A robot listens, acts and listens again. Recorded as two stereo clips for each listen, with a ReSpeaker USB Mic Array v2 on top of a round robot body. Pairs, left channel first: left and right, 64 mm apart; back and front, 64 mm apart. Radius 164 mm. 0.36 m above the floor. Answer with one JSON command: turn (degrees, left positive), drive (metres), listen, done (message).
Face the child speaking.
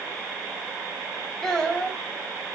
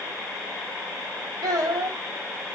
{"turn": 10}
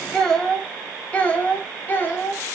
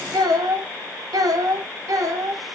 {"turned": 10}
{"turn": 30}
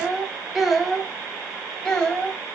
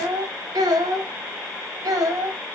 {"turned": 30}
{"turn": 10}
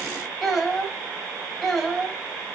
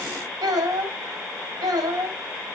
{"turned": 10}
{"done": "Found it: a child speaking, straight ahead, 2 to 4 m away."}